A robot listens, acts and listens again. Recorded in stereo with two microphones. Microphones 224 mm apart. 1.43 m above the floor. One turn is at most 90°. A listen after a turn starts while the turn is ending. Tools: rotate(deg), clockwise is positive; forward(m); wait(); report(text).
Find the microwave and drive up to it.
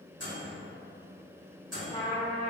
rotate(90)
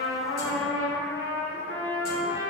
wait()
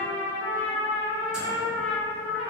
wait()
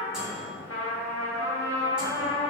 report("I heard a microwave from this way, but can't make it out now. I did not reach it.")